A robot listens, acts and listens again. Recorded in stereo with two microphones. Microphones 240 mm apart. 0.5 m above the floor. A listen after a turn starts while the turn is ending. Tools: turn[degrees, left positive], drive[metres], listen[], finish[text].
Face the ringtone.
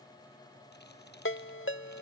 Thought: The ringtone: about 55° left or 125° left.
Action: turn[55]
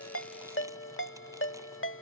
Thought: So it is at 65° left.
Action: turn[65]
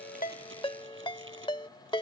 Thought: The ringtone is now 20° left.
Action: turn[20]
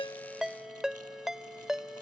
Action: finish[Found it: a ringtone, straight ahead.]